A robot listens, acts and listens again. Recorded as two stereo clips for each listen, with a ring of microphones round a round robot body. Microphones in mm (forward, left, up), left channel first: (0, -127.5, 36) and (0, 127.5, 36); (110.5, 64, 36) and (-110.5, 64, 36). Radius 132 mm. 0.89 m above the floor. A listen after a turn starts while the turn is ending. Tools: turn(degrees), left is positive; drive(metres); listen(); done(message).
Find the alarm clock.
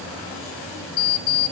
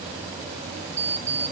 turn(degrees=-100)
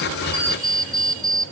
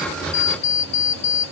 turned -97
done("Found it: an alarm clock, straight ahead, 1 to 2 m away.")